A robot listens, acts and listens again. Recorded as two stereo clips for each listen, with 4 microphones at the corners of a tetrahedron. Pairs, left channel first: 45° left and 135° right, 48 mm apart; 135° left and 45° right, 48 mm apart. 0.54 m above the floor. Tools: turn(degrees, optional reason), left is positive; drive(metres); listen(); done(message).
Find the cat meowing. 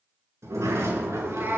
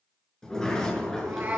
turn(degrees=-95, reason="The cat meowing: 95° right.")
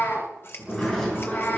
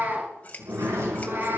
done("Found it: a cat meowing, straight ahead.")